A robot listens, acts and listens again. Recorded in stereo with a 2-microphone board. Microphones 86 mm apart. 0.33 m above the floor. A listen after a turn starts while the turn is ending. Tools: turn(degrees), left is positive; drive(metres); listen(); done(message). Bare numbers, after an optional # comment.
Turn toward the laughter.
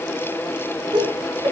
# The laughter: about 70° right or 110° right.
turn(-70)
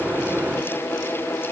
listen()
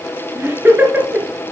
# So it is at 20° right.
turn(-20)
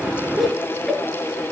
done("Found it: laughter, straight ahead.")